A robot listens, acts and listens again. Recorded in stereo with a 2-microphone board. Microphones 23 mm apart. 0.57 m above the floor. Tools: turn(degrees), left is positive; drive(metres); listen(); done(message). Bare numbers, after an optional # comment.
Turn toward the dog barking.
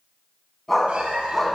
# The dog barking: about 20° left or 160° left.
turn(20)
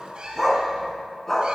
# The dog barking: about 20° left or 160° left.
turn(20)
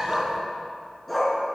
turn(30)
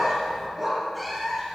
# So it is at 10° right.
turn(-10)
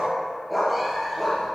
done("Facing the dog barking, over 4 m away.")